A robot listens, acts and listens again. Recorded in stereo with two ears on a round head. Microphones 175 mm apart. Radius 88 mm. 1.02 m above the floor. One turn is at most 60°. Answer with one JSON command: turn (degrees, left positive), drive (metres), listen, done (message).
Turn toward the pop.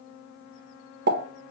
{"turn": -50}
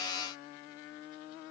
{"listen": true}
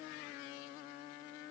{"done": "I heard a pop, but can't make it out now. It was about straight ahead or 80° right."}